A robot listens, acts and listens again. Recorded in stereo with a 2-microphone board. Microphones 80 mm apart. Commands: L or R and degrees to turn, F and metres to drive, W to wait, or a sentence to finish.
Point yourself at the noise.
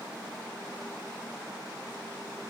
W
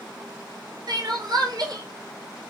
R55
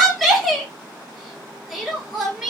Facing the crying, 1 to 2 m away.